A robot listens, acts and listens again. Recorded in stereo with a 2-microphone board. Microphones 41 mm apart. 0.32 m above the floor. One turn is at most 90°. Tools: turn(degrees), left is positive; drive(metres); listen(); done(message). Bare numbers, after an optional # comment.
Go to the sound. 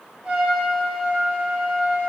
# The trumpet: about 20° right or 160° right.
turn(-20)
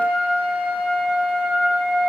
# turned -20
# So it is at 140° right.
turn(-90)
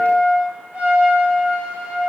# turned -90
# The trumpet is now 45° right.
turn(-45)
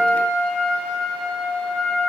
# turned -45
# The trumpet is now 15° right.
turn(-15)
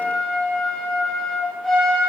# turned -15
drive(1.0)
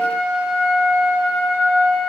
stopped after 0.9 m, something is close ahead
done("Arrived at the trumpet, straight ahead.")